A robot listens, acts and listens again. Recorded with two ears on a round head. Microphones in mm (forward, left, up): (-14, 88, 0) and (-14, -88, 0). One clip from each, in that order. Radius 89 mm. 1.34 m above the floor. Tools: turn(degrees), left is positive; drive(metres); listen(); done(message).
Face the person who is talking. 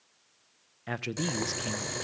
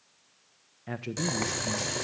turn(degrees=50)
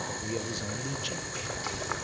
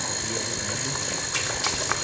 listen()
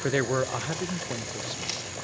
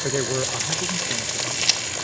turn(degrees=80)
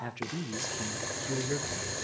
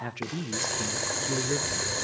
turn(degrees=-10)
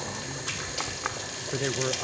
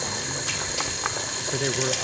done("Facing the man speaking, under 1 m away.")